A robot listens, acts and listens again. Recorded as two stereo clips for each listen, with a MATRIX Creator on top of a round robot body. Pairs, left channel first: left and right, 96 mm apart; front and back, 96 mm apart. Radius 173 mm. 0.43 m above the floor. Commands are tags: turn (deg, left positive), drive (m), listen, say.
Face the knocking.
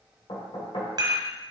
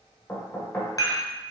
<turn deg="65"/>
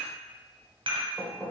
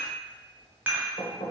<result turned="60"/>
<say>Facing the knocking, 1 to 2 m away.</say>